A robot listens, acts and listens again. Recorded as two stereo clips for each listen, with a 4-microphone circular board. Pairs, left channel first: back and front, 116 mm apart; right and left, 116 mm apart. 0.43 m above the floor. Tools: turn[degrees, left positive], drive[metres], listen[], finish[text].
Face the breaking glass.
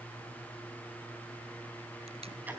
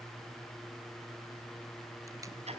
Action: listen[]
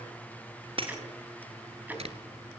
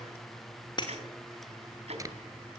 Thought: The breaking glass: 40° right.
Action: turn[-40]
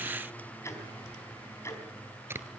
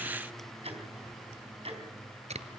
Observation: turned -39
Action: finish[Facing where the breaking glass came from. I can't hear it now.]